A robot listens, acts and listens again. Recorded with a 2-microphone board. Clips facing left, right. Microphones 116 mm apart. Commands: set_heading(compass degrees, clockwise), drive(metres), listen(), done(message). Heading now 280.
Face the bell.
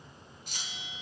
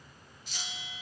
set_heading(340)
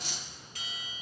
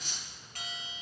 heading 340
set_heading(35)
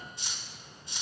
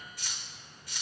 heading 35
listen()
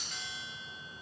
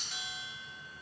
set_heading(45)
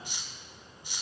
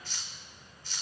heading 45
listen()
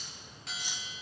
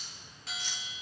done("Found it: a bell, straight ahead, 2 to 4 m away.")